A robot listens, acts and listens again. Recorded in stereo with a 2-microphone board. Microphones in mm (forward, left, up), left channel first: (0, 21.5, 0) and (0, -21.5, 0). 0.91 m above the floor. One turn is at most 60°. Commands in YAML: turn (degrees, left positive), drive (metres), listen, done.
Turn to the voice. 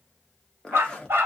listen: true
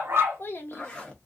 turn: 60
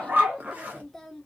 turn: 10
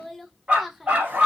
done: "Facing the child speaking."